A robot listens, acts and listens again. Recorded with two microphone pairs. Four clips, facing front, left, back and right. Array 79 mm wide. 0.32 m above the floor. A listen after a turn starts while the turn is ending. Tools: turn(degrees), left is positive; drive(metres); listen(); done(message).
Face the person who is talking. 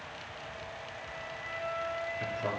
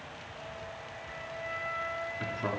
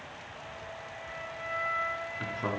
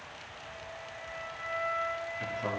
turn(degrees=155)
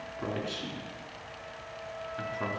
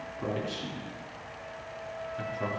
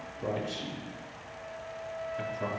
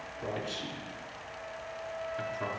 turn(degrees=-20)
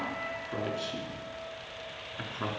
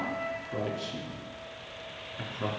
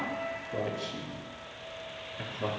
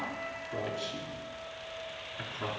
done("Facing the man speaking.")